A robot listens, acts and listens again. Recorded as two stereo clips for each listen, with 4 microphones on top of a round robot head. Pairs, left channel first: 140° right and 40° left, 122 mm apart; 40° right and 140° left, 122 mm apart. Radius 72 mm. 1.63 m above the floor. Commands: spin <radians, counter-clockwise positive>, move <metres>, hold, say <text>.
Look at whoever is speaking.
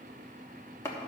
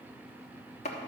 hold
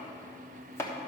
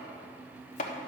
hold
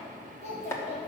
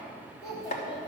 spin -1.75
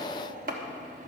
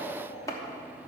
say Found it: a child speaking, straight ahead.